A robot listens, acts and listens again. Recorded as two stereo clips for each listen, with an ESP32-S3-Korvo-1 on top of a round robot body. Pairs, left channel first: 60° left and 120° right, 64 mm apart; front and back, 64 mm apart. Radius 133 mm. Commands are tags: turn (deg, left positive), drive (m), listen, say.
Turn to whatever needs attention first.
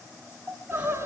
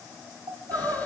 <turn deg="165"/>
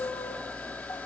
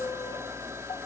<listen/>
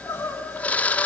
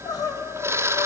<say>Found it: crying, straight ahead, 2 to 4 m away.</say>